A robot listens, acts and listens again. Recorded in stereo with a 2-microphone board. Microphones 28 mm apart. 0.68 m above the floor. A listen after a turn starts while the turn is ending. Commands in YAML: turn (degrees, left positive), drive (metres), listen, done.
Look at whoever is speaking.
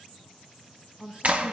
turn: -35
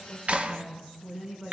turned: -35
done: "Facing the woman speaking, over 4 m away."